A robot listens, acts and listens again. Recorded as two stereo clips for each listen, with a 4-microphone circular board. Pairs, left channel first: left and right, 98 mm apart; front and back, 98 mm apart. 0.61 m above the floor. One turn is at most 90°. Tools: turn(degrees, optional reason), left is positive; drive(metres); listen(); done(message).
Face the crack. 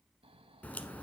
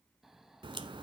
turn(degrees=90, reason="The crack: 165° left.")
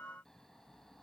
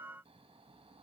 turn(degrees=75, reason="Nothing new. It was at 75° left.")
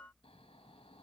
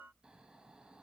done("Facing where the crack came from. I can't hear it now.")